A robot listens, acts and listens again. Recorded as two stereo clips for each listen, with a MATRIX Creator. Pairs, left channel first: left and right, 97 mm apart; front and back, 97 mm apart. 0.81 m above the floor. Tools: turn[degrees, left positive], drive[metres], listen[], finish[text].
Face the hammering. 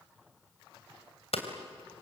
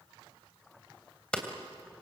Thought: The hammering: 80° left.
Action: turn[80]
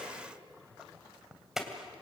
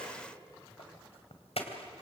Action: finish[Found it: hammering, straight ahead.]